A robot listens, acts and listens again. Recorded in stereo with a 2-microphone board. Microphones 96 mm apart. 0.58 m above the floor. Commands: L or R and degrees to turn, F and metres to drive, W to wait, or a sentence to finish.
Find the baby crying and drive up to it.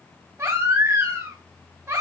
R25
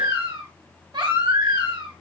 R130
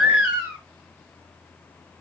R15
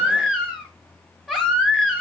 F1.0
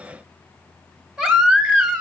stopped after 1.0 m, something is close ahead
I am next to the baby crying.